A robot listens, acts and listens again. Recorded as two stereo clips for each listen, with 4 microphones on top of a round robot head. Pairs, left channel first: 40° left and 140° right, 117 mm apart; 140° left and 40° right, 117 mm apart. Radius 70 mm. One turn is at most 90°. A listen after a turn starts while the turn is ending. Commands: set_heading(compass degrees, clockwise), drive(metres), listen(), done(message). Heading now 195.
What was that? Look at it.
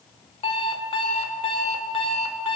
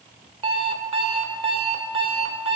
done("Facing the alarm clock.")